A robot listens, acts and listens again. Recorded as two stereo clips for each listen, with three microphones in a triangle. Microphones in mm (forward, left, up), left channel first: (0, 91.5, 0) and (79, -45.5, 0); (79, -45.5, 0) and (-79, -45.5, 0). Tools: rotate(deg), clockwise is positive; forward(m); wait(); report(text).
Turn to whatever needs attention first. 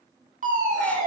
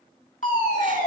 rotate(30)
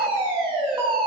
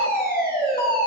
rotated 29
report("Facing the fire alarm, over 4 m away.")